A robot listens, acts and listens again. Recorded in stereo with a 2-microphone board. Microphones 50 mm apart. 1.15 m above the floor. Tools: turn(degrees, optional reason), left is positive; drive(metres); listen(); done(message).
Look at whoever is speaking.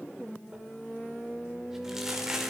listen()
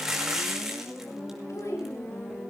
turn(degrees=90)
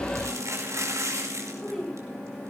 turn(degrees=10, reason="So it is at 10° left.")
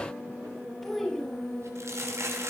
done("Facing the child speaking, over 4 m away.")